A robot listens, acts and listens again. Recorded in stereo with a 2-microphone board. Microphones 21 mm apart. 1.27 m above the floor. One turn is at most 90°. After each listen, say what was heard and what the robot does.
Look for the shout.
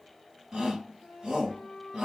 The shout: about 40° right or 140° right. Turn 40° right.
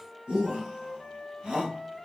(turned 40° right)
So it is at 100° right. Turn 90° right.
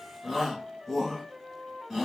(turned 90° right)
The shout is now 15° right. Turn 15° right.
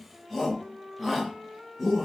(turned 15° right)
Found it: a shout, straight ahead.